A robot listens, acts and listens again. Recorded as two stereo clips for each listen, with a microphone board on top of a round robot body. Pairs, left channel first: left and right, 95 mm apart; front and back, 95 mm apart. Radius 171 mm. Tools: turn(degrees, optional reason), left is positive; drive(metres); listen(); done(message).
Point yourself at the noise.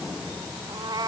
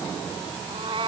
turn(degrees=-145, reason="The cat meowing: 145° right.")
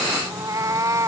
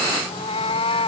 turn(degrees=-30, reason="The cat meowing is now 30° right.")
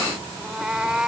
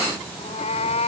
turn(degrees=-10, reason="The cat meowing is now 10° right.")
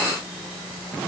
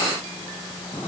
listen()
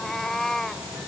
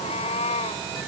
done("Found it: a cat meowing, straight ahead.")